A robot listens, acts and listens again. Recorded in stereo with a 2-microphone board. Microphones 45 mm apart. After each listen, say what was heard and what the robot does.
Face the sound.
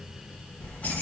The keys jangling: about 45° left or 135° left. Turn 45° left.
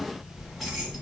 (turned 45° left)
Found it: keys jangling, straight ahead, 1 to 2 m away.